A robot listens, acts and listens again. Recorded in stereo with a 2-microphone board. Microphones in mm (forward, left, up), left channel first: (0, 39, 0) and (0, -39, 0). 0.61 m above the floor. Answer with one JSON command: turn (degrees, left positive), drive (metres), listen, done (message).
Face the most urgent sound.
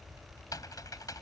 {"listen": true}
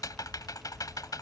{"listen": true}
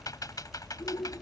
{"turn": 75}
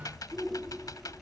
{"done": "Found it: a shout, straight ahead."}